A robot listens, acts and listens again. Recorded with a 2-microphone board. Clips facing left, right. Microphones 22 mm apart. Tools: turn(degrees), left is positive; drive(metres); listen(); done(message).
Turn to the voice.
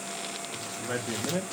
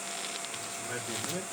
turn(degrees=75)
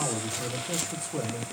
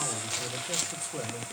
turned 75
done("Facing the man speaking.")